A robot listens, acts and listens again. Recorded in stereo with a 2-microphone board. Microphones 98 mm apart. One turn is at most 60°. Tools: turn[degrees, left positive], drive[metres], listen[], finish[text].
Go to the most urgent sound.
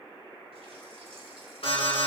Thought: The alarm: about 75° left or 105° left.
Action: turn[60]
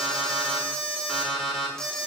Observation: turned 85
Action: drive[1.0]
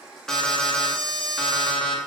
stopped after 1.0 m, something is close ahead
Action: finish[Blocked. The alarm is further on, straight ahead.]